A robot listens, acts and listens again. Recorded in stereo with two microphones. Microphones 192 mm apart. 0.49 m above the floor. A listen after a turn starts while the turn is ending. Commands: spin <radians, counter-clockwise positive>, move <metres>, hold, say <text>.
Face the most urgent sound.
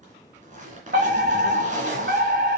spin -1.05
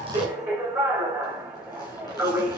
spin -0.17
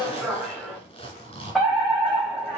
say Found it: a fire alarm, straight ahead.